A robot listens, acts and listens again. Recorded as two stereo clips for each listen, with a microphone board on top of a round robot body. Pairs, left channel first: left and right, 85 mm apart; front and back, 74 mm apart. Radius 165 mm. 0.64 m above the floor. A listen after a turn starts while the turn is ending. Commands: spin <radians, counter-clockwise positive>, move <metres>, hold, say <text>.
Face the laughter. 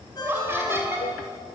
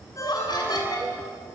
spin -0.44
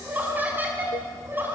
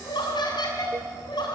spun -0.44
spin -0.44
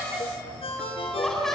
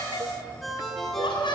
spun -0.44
say Facing the laughter, over 4 m away.